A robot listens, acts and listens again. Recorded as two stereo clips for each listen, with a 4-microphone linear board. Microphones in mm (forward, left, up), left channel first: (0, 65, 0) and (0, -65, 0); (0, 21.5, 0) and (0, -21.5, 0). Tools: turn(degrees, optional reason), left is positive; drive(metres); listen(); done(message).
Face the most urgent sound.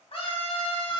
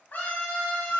turn(degrees=50, reason="The scream: about 50° left or 130° left.")
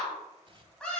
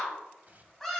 turn(degrees=10, reason="So it is at 10° left.")
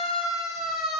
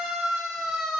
done("Facing the scream, 2 to 4 m away.")